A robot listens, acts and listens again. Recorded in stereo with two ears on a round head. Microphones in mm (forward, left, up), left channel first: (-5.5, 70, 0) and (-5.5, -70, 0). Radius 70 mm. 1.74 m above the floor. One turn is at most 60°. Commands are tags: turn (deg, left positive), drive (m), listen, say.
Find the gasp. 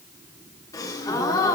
<turn deg="25"/>
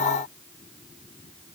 <listen/>
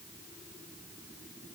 <say>I heard a gasp, but can't make it out now. It was about straight ahead or 130° left.</say>